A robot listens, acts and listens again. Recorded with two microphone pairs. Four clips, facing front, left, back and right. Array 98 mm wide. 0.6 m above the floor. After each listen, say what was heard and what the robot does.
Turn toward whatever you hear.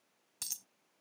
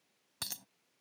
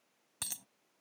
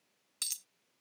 The dropped coin: 120° left. Turn 120° left.
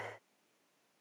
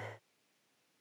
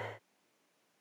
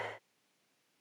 Facing where the dropped coin came from. I can't hear it now.